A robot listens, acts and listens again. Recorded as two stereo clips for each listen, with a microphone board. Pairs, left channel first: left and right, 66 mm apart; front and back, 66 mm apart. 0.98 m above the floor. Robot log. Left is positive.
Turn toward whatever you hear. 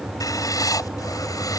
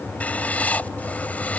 note: The writing: 65° left.
cmd yaw +65
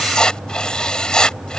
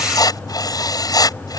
note: The writing is now 10° left.
cmd yaw +10
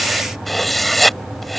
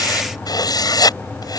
end: Found it: writing, straight ahead.